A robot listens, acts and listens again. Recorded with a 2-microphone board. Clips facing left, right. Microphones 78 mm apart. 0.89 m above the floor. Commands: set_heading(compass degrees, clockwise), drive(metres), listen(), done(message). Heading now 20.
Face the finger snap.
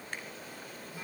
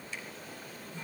set_heading(325)
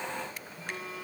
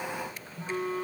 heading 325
listen()
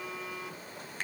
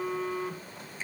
set_heading(255)
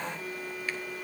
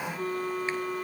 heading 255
listen()
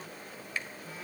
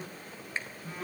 set_heading(280)
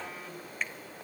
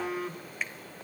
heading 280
done("Found it: a finger snap, straight ahead, 2 to 4 m away.")